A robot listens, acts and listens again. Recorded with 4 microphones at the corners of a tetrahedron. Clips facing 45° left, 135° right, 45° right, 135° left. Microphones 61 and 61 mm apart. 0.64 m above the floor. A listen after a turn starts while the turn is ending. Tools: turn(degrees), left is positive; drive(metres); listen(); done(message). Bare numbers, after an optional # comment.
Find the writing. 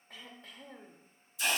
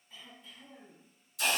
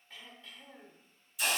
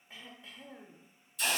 listen()
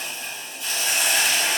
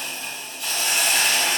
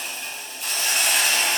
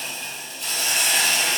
listen()
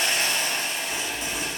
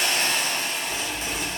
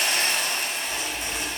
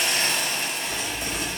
# The writing: 170° left.
turn(170)
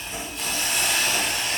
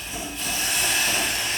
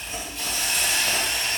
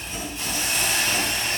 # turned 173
listen()
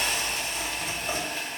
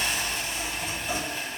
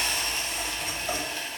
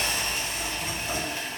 done("Facing the writing.")